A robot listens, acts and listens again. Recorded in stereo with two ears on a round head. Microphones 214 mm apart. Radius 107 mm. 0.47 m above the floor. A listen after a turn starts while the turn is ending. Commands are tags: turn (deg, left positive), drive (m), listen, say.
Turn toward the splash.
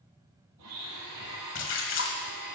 <turn deg="55"/>
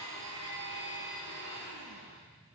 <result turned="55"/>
<listen/>
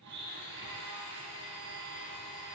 <say>I heard a splash, but can't make it out now. It was about straight ahead or 70° left.</say>